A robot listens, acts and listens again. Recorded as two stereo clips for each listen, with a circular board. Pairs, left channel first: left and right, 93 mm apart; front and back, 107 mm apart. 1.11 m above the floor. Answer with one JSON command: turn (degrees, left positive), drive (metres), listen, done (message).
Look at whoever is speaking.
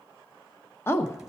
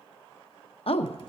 {"turn": 25}
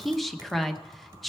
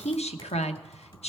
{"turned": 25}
{"done": "Facing the woman speaking."}